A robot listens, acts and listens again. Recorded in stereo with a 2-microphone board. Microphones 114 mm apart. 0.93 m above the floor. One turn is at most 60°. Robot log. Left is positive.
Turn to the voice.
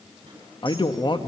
note: The man speaking: about 40° left or 140° left.
cmd yaw +40
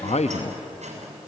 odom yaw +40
note: So it is at 95° left.
cmd yaw +60
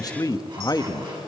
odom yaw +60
note: The man speaking is now 35° left.
cmd yaw +35
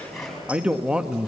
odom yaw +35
note: The man speaking is now 10° right.
cmd yaw -10
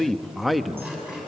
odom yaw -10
end: Facing the man speaking.